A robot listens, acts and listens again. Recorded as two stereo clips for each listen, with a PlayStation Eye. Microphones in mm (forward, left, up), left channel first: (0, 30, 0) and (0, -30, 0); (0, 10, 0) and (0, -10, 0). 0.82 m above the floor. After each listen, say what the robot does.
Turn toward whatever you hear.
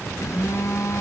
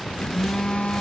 Turn 65° left.
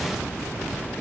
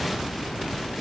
Keep listening.
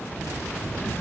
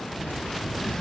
Keep listening.
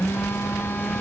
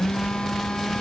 Turn 45° left.
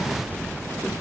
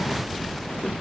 Keep listening.
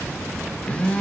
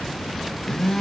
Turn 20° left.
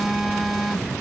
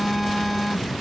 Facing the phone buzzing.